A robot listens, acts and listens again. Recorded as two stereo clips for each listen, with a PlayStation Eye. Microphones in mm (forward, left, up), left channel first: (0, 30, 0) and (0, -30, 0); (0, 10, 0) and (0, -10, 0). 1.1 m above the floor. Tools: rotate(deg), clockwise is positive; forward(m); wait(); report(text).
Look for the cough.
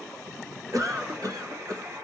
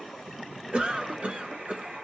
rotate(90)
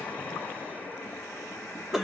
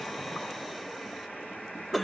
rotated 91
report("Found it: a cough, straight ahead, 1 to 2 m away.")